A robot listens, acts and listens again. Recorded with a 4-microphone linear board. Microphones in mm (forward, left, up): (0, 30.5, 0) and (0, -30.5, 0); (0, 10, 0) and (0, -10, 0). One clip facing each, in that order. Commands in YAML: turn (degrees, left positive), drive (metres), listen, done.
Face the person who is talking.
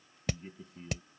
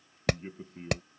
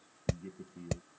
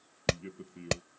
turn: -40
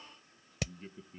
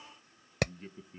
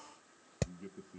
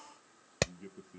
turn: -10
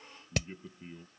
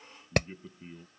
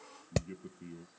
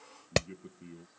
done: "Found it: a man speaking, straight ahead."